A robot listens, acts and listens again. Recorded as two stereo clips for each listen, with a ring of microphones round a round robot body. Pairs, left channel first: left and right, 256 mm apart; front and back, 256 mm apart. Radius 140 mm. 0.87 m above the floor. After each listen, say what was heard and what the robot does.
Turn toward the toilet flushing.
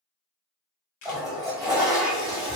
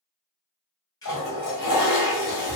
Facing the toilet flushing.